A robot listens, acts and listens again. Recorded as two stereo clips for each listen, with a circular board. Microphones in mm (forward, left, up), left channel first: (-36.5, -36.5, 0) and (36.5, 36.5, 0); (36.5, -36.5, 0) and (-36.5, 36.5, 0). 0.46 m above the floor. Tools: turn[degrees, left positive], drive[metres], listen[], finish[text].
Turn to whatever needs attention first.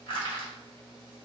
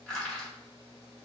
Action: listen[]
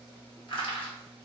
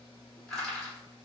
Action: listen[]
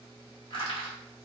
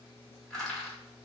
Action: finish[I can't make out anything urgent, only crushing.]